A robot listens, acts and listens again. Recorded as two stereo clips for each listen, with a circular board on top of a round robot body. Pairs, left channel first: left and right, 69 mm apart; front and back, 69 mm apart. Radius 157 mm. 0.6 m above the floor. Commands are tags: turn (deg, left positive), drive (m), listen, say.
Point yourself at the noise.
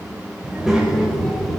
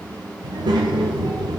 <turn deg="180"/>
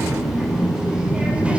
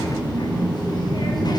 <turn deg="-20"/>
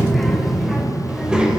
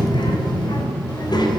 <turn deg="-15"/>
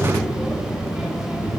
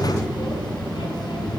<turn deg="-10"/>
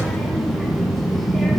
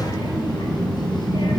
<say>Facing the child speaking.</say>